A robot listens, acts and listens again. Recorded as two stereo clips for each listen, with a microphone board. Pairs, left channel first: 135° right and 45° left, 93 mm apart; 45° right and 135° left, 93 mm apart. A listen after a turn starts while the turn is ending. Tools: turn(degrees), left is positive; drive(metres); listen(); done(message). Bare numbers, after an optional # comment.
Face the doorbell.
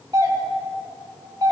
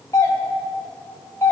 done("Facing the doorbell, 1 to 2 m away.")